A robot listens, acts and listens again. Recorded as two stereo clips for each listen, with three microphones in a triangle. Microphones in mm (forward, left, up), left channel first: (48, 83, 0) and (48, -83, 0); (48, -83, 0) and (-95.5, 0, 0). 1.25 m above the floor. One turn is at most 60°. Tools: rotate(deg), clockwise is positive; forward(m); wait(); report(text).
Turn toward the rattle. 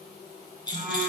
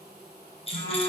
rotate(-25)
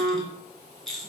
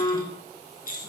report("Facing the rattle.")